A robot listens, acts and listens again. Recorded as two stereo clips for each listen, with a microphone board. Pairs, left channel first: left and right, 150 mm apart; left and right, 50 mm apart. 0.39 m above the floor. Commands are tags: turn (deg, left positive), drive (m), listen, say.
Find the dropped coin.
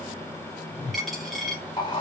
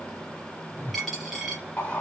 <turn deg="30"/>
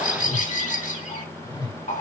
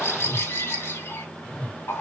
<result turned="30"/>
<listen/>
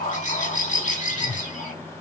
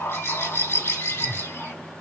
<say>I heard a dropped coin, but can't make it out now. It was about 30° right or 150° left.</say>